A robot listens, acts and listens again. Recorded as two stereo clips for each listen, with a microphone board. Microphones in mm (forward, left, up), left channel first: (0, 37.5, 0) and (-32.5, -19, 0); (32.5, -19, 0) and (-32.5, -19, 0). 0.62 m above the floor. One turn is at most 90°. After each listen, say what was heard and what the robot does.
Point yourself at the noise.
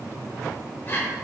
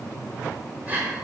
The breathing: 115° left. Turn 90° left.
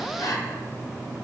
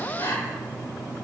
The breathing is now 30° left. Turn 30° left.
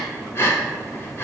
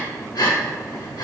The breathing is now 10° left. Turn 10° left.
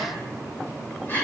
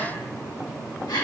Facing the breathing, 1 to 2 m away.